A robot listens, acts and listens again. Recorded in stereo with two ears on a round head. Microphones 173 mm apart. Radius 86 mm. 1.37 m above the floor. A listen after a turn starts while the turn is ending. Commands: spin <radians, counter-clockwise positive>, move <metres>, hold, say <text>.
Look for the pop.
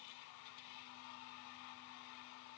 hold
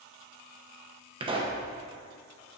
spin -0.44
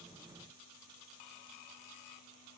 hold
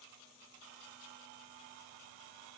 say I heard a pop, but can't make it out now. It was about straight ahead or 130° right.